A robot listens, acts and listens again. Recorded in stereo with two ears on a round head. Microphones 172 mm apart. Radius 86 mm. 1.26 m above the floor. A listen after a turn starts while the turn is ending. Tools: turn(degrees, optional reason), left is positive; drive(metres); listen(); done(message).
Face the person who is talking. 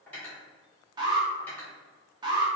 listen()
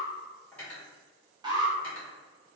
listen()
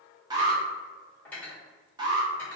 done("I can't make out anyone speaking, only an alarm and cutlery clinking.")